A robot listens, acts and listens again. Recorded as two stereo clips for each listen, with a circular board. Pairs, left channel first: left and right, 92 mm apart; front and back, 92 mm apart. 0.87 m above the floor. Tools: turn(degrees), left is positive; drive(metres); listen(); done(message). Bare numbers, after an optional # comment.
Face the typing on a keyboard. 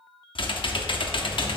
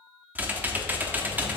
# The typing on a keyboard: 110° left.
turn(110)
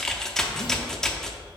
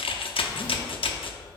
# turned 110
done("Found it: typing on a keyboard, straight ahead.")